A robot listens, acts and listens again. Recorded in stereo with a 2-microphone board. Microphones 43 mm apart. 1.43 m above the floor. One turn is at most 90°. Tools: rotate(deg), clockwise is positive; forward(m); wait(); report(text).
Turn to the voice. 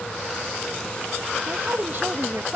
rotate(50)
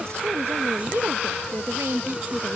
rotate(80)
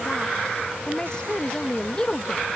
rotate(-20)
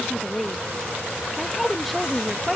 report("Found it: a woman speaking, straight ahead.")